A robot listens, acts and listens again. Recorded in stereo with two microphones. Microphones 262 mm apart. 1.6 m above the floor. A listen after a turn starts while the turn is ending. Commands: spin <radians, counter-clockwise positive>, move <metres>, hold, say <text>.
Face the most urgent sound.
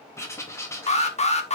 spin 0.44
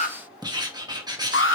spin 2.27
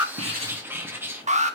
spin -0.44
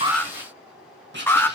spin 0.17
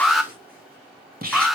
say Facing the alarm, 1 to 2 m away.